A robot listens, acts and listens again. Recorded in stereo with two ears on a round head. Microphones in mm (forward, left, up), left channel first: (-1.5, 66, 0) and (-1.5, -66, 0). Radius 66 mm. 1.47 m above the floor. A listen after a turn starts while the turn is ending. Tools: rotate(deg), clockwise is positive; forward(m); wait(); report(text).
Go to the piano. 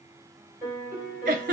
rotate(20)
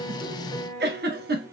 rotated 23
rotate(135)
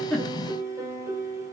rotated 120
rotate(20)
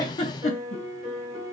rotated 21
forward(1.0)
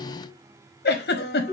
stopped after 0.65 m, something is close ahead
report("Something is in my way. I am facing the piano but have not reached it.")